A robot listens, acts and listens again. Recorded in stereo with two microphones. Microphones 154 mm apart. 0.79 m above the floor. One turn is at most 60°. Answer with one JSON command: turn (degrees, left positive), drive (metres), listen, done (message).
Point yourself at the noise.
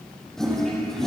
{"turn": 30}
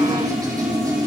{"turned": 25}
{"turn": -25}
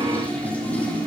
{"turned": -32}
{"turn": 10}
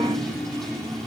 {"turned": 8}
{"done": "Facing the toilet flushing, over 4 m away."}